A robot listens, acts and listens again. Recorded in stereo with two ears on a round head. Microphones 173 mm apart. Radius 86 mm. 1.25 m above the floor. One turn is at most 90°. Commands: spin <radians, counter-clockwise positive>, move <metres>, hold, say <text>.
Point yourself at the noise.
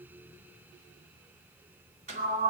spin -0.70
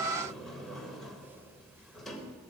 say Found it: a sliding door, straight ahead, 2 to 4 m away.